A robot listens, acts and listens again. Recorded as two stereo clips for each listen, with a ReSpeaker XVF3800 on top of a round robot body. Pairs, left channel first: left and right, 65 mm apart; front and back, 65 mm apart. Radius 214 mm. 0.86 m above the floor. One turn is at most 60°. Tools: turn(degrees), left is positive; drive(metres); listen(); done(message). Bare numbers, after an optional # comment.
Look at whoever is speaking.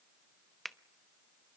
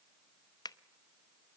listen()
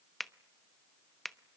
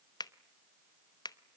listen()
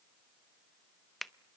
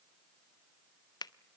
done("I can't make out anyone speaking, only a finger snap.")